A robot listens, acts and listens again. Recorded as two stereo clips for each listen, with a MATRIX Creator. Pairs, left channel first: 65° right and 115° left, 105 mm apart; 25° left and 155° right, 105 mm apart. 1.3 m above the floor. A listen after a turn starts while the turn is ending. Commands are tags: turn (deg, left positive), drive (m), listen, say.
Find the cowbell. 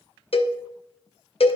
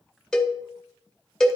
<turn deg="-65"/>
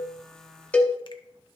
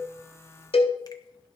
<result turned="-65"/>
<turn deg="10"/>
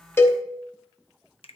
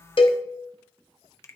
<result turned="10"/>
<say>Found it: a cowbell, straight ahead, under 1 m away.</say>